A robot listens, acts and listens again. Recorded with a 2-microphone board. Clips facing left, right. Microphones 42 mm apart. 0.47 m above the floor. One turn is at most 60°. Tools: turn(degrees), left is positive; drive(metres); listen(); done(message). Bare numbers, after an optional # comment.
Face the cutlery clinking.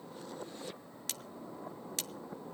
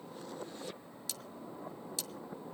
# The cutlery clinking: about 60° left or 120° left.
turn(60)
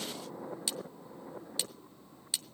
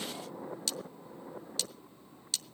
# So it is at 20° left.
turn(20)
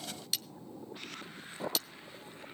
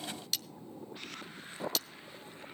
done("Found it: cutlery clinking, straight ahead.")